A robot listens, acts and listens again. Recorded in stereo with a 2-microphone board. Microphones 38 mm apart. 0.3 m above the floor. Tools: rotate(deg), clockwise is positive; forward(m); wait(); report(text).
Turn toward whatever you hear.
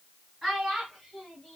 rotate(30)
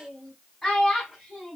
rotate(-30)
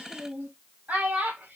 rotate(45)
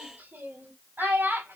rotate(60)
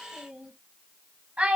rotate(30)
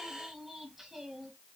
rotate(10)
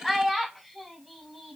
report("Found it: a child speaking, straight ahead.")